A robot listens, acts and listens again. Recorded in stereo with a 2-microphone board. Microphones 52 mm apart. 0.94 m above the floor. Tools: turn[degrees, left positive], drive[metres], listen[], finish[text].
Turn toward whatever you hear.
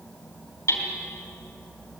Thought: The hammering: about 65° left or 115° left.
Action: turn[65]
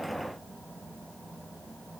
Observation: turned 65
Action: listen[]
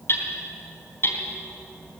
Thought: So it is at 50° left.
Action: turn[50]
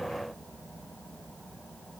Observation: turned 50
Action: listen[]
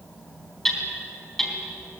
Thought: The hammering is now 10° left.
Action: turn[10]
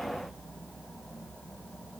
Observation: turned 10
Action: listen[]
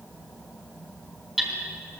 Action: finish[Found it: hammering, straight ahead, 2 to 4 m away.]